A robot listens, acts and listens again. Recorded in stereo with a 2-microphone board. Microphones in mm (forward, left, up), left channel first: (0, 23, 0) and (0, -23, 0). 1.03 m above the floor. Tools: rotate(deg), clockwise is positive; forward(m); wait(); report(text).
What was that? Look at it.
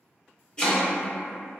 rotate(-20)
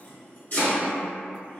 rotate(-135)
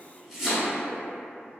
rotate(10)
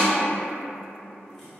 report("Facing the chopping.")